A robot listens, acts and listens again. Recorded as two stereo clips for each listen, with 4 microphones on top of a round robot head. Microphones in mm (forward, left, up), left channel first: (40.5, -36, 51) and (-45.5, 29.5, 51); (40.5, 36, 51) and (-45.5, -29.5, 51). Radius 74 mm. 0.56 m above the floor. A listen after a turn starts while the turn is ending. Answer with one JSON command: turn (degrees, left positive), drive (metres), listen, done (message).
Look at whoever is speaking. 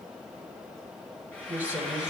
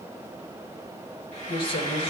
{"turn": 65}
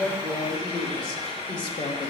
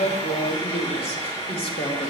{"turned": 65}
{"done": "Found it: a woman speaking, straight ahead, 2 to 4 m away."}